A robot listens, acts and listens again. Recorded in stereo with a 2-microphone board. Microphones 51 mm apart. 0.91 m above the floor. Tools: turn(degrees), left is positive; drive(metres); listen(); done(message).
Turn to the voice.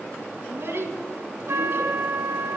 turn(degrees=-50)
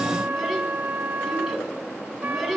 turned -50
done("Found it: a child speaking, straight ahead, over 4 m away.")